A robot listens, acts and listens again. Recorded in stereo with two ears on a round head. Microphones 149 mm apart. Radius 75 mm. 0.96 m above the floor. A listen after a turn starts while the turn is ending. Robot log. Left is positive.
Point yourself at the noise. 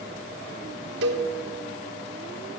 cmd yaw -90
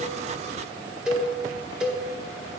end: Facing the cowbell.